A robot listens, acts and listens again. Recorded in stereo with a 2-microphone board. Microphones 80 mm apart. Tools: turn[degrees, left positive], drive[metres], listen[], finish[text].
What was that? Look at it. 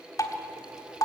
Thought: The dripping: about 50° left or 130° left.
Action: turn[50]
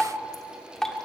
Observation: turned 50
Action: finish[Found it: dripping, straight ahead, 1 to 2 m away.]